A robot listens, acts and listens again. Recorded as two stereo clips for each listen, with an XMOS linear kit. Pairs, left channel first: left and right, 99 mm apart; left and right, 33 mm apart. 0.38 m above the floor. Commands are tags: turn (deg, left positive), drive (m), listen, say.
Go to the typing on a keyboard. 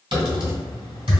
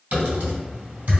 <turn deg="-60"/>
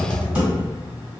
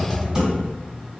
<turn deg="-20"/>
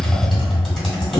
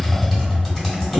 <drive m="1.0"/>
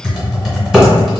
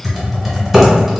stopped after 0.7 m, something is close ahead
<say>Arrived at the typing on a keyboard, straight ahead.</say>